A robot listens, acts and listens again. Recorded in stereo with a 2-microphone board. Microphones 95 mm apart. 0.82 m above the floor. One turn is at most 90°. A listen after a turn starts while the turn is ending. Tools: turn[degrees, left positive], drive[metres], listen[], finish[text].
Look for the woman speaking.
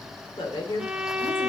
Thought: The woman speaking: about 60° left or 120° left.
Action: turn[60]
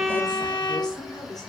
Thought: So it is at 45° left.
Action: turn[45]
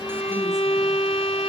Action: listen[]
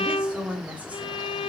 Thought: The woman speaking is now 15° right.
Action: turn[-15]
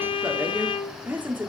Thought: The woman speaking is now 20° right.
Action: turn[-20]
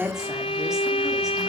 Action: finish[Found it: a woman speaking, straight ahead, 2 to 4 m away.]